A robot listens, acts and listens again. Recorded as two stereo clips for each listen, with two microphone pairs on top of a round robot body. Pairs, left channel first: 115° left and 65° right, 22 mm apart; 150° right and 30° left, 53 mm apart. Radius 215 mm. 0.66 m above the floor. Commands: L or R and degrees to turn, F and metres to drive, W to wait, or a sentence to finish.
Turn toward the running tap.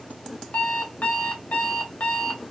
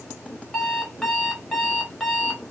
W
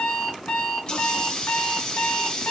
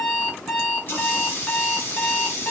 L165
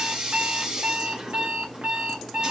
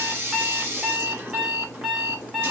R10
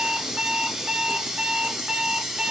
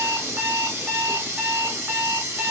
Found it: a running tap, straight ahead, 1 to 2 m away.